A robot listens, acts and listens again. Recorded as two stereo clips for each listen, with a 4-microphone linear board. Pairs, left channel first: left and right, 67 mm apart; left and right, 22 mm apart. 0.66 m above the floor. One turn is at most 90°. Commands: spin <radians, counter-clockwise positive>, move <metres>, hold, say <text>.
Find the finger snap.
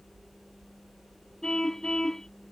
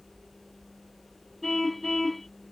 hold
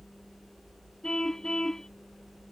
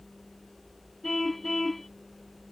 hold
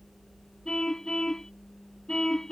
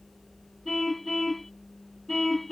say I can't make out a finger snap to turn to.